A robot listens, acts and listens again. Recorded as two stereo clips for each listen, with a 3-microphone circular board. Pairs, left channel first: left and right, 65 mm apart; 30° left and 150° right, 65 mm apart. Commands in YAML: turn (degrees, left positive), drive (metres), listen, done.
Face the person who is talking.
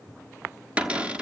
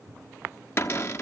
listen: true
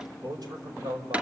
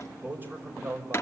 turn: -90
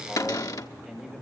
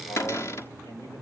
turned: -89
done: "Facing the man speaking, over 4 m away."